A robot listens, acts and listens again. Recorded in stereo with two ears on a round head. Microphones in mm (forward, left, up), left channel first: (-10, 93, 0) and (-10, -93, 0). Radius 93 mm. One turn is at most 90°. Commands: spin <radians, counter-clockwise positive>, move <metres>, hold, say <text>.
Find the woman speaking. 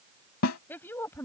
spin 0.52
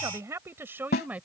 say Facing the woman speaking.